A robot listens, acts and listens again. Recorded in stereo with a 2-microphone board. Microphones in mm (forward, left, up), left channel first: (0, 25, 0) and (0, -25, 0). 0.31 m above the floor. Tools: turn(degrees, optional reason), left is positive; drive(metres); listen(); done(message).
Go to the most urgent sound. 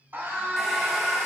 turn(degrees=-40, reason="The scream: about 40° right or 140° right.")
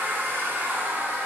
listen()
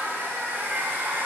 listen()
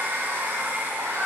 turn(degrees=-95, reason="So it is at 95° right.")
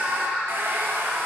turn(degrees=-20, reason="The scream is now 20° right.")
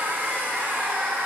listen()
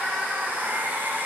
drive(metres=1.0)
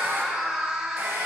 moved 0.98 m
turn(degrees=-15, reason="The scream is now 15° right.")
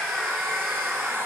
drive(metres=1.0)
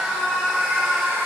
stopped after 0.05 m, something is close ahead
done("I am next to the scream.")